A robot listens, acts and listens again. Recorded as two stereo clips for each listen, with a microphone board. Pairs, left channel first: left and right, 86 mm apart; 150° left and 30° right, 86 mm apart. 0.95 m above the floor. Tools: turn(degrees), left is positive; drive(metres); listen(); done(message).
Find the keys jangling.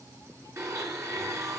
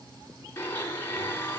listen()
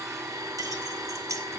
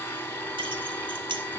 turn(degrees=-40)
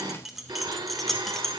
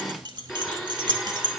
done("Found it: keys jangling, straight ahead.")